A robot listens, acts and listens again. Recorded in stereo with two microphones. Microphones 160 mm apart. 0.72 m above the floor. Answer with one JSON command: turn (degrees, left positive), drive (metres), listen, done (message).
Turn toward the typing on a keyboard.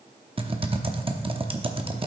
{"turn": -35}
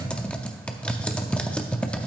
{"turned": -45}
{"turn": 10}
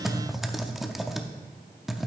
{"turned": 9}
{"done": "Found it: typing on a keyboard, straight ahead."}